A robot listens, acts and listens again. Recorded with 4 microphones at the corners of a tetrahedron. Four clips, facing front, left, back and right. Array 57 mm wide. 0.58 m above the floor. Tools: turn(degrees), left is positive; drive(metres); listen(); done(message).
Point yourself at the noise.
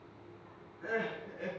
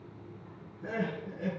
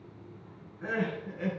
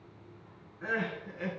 turn(degrees=-115)
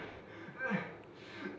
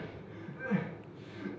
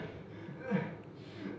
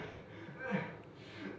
done("Facing the crying.")